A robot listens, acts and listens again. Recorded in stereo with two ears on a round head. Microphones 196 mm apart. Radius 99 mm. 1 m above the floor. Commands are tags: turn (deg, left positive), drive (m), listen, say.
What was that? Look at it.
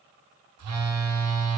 <turn deg="-90"/>
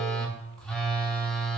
<say>Found it: a phone buzzing, straight ahead.</say>